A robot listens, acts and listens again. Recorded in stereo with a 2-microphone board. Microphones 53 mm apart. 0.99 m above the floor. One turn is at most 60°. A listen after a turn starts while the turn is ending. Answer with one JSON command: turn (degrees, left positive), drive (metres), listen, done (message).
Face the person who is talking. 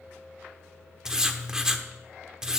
{"listen": true}
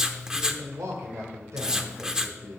{"turn": -60}
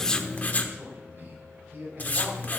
{"turn": -50}
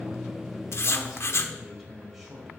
{"done": "Facing the man speaking."}